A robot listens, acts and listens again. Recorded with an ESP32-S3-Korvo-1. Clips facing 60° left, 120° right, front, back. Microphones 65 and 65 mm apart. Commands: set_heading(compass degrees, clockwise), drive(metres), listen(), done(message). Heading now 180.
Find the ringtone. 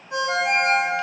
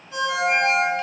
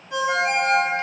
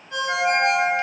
set_heading(100)
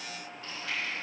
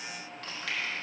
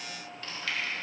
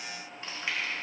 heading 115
set_heading(100)
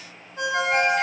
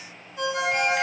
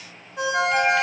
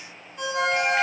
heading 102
done("Facing the ringtone, 2 to 4 m away.")